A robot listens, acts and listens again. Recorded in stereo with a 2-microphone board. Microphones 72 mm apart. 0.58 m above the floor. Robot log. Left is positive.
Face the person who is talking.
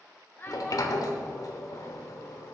note: The child speaking: about 30° left or 150° left.
cmd yaw +30
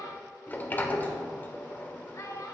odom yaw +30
note: So it is at 110° left.
cmd yaw +110
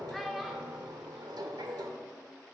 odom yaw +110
end: Found it: a child speaking, straight ahead.